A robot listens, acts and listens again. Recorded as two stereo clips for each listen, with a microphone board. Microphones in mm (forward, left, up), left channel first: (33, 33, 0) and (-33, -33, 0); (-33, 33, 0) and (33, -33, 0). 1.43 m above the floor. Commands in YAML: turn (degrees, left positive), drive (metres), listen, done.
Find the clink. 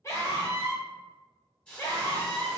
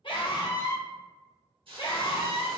listen: true
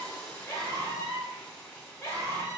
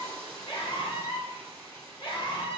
listen: true
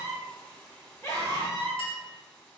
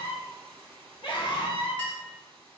turn: 60
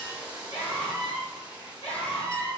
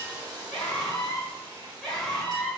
listen: true
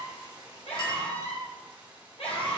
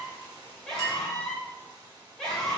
listen: true
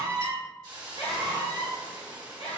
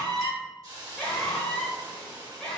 done: "I heard a clink from this way, but can't make it out now."